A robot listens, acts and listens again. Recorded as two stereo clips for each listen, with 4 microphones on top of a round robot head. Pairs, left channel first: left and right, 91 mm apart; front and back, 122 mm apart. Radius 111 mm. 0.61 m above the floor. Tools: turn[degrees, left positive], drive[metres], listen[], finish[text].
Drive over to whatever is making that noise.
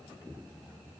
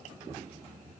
Action: listen[]
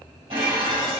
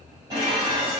Thought: The dishes clattering: 120° right.
Action: turn[-120]
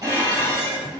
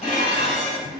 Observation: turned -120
Thought: The dishes clattering is now 40° right.
Action: turn[-40]
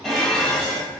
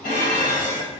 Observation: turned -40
Action: drive[1.0]
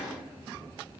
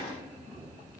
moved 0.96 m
Action: drive[1.0]
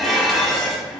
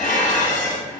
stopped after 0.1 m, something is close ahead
Action: finish[Arrived at the dishes clattering, straight ahead.]